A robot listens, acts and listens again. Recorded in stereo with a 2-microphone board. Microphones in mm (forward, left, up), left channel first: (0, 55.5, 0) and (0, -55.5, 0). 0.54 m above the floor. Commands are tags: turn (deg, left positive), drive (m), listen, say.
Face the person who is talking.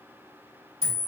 <listen/>
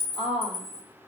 <turn deg="35"/>
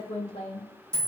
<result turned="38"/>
<turn deg="100"/>
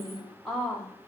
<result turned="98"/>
<say>Found it: a woman speaking, straight ahead, 1 to 2 m away.</say>